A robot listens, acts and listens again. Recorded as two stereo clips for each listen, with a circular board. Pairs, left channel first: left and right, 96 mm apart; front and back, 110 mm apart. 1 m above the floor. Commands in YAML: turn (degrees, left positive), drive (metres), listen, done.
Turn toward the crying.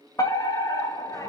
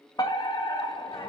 listen: true
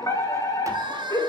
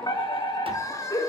turn: -55
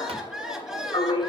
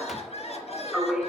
done: "Facing the crying."